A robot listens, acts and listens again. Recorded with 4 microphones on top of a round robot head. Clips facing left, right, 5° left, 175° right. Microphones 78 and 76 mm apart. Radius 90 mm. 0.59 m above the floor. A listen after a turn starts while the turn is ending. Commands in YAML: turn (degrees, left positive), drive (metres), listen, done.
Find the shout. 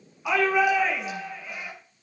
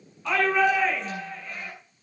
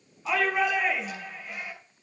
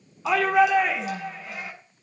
turn: 170
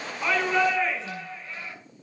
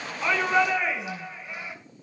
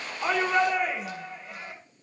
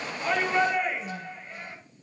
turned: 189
turn: -15
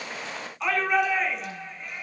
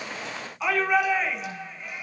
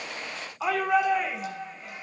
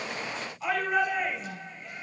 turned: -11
done: "Facing the shout."